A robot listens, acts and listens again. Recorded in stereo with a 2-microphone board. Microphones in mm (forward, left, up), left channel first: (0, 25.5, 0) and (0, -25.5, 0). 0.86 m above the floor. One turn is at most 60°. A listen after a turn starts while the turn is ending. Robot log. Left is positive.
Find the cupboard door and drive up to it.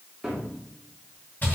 cmd yaw -30
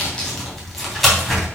cmd idle
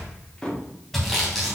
note: So it is at 15° left.
cmd yaw +15
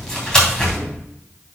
cmd idle
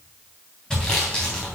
cmd idle
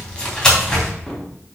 end: Facing where the cupboard door came from. I can't hear it now. I did not reach it.